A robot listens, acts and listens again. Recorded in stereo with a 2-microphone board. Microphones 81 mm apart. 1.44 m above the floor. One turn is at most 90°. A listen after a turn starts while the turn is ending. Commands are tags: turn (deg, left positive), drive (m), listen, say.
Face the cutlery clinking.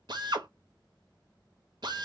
<listen/>
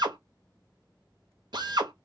<listen/>
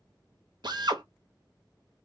<say>I can't make out cutlery clinking, only a drill.</say>